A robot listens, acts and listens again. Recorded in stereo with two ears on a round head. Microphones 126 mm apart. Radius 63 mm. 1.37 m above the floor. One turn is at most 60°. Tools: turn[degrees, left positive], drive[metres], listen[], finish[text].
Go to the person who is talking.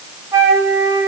Action: listen[]
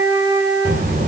Thought: The child speaking: about 55° right or 125° right.
Action: turn[-55]
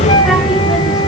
Action: drive[1.0]
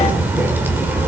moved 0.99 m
Thought: The child speaking is now 15° right.
Action: turn[-15]
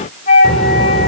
Action: drive[1.0]
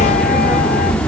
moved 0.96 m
Thought: The child speaking is now 10° left.
Action: turn[10]
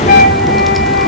Action: drive[1.0]
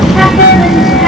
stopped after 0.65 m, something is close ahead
Action: finish[Arrived at the child speaking, straight ahead.]